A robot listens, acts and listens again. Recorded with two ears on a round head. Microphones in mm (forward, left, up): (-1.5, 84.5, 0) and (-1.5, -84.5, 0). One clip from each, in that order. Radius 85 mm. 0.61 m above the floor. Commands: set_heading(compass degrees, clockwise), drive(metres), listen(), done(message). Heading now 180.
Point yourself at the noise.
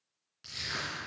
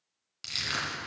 set_heading(245)
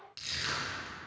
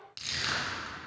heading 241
done("Facing the crushing, 2 to 4 m away.")